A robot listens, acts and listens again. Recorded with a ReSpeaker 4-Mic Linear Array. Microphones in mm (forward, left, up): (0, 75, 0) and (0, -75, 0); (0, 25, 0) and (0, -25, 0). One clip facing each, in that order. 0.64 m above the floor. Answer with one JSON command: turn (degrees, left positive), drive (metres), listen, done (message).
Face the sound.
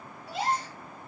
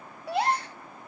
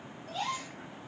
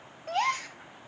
{"turn": -65}
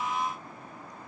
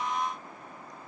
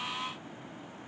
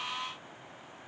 {"listen": true}
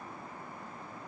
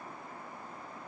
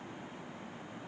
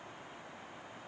{"done": "I heard a gasp, but can't make it out now. It was about straight ahead or 50° right."}